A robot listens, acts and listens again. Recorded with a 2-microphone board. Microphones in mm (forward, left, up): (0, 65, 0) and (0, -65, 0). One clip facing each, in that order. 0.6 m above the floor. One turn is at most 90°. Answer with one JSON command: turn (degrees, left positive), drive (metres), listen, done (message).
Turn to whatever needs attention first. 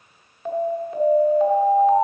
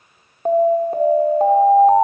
{"turn": -40}
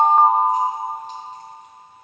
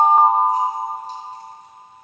{"turn": -10}
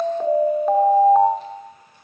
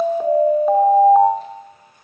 {"done": "Found it: an alarm, straight ahead."}